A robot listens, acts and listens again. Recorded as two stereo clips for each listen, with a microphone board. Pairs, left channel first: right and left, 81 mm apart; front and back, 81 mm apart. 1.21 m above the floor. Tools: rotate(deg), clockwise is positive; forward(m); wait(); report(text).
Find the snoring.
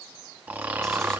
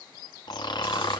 rotate(-25)
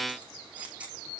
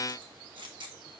wait()
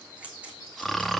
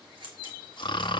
report("Facing the snoring, 1 to 2 m away.")